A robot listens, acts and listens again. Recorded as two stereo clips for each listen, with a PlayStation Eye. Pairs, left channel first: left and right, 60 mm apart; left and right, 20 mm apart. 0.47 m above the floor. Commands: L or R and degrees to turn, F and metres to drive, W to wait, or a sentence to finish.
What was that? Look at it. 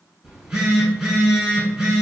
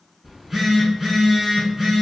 R15
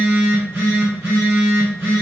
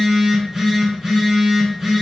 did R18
R145
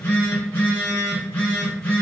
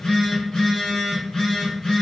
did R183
L35
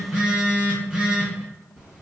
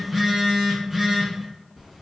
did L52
R15
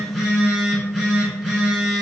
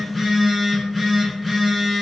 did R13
Found it: a phone buzzing, straight ahead, 1 to 2 m away.